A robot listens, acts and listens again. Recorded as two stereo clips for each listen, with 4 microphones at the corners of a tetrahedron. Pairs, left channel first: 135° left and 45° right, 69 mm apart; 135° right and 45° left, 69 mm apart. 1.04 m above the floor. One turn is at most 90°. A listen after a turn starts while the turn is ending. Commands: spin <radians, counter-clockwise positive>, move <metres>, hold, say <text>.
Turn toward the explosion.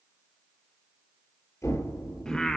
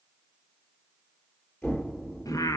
spin 1.57
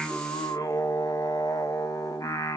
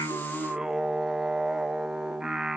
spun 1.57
spin 1.40
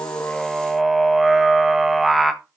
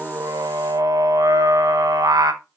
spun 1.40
say Facing where the explosion came from. I can't hear it now.